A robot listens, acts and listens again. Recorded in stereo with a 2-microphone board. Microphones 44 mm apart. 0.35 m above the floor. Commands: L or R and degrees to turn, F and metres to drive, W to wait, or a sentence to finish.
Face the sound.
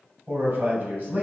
R45
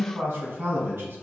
R70
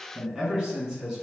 R20
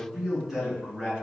R10
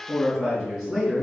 Found it: a man speaking, straight ahead.